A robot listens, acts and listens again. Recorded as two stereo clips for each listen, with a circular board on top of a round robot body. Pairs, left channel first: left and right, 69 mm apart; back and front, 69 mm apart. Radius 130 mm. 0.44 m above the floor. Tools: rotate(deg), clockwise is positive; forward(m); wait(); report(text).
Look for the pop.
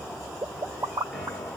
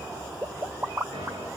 rotate(55)
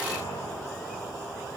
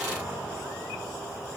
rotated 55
report("Facing where the pop came from. I can't hear it now.")